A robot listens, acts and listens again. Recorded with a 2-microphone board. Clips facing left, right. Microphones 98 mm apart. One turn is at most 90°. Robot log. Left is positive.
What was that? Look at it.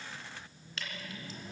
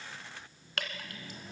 note: The dripping: about 65° right or 115° right.
cmd yaw -65
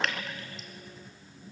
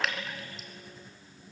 end: Facing the dripping.